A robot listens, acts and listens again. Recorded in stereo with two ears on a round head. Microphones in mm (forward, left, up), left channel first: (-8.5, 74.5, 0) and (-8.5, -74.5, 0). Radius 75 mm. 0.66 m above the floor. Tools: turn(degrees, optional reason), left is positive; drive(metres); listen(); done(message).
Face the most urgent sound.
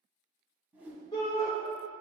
turn(degrees=20, reason="The shout: about 20° left or 160° left.")
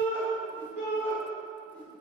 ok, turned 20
turn(degrees=135, reason="So it is at 135° left.")
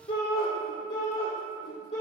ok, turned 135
turn(degrees=45, reason="The shout is now 45° left.")
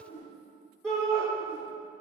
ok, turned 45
done("Facing the shout, 1 to 2 m away.")